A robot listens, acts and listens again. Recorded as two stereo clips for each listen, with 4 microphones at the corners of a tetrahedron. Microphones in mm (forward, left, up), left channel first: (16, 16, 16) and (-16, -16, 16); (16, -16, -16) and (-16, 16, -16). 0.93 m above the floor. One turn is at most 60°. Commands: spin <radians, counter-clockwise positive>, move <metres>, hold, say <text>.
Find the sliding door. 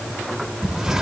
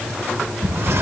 spin 1.05
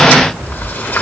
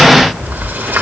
spin 1.05
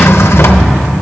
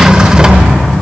spin 1.05
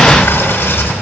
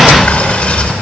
spin 0.17
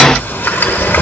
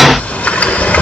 say Facing the sliding door, under 1 m away.